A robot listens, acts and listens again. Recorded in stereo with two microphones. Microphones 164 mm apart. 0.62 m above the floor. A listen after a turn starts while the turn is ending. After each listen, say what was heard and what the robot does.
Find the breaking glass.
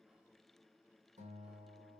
Keep listening.
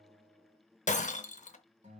The breaking glass: about 50° left or 130° left. Turn 50° left.
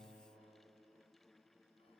Keep listening.
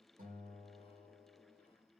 I heard breaking glass, but can't make it out now. It was about straight ahead or 80° left.